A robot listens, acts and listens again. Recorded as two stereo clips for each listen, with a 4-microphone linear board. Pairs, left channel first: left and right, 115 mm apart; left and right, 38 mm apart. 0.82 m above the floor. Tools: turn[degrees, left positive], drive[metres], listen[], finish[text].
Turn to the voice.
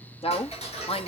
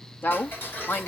Thought: The woman speaking: about 60° left or 120° left.
Action: turn[60]
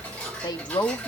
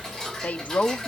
Thought: So it is at 45° left.
Action: turn[45]
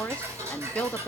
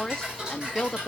Thought: The woman speaking is now 15° left.
Action: turn[15]
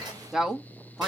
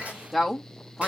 Action: finish[Found it: a woman speaking, straight ahead, 1 to 2 m away.]